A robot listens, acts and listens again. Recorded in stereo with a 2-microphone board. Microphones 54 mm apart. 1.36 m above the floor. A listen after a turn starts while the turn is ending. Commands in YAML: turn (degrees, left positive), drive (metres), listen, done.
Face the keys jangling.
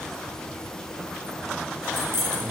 turn: -50
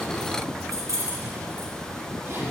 turn: -80
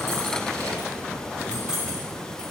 turn: -20
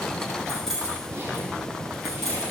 done: "Facing the keys jangling."